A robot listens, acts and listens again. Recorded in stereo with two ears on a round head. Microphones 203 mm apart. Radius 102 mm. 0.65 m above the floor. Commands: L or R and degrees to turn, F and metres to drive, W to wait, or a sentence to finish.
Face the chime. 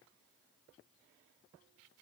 W
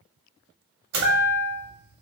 R70
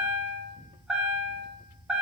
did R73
Found it: a chime, straight ahead.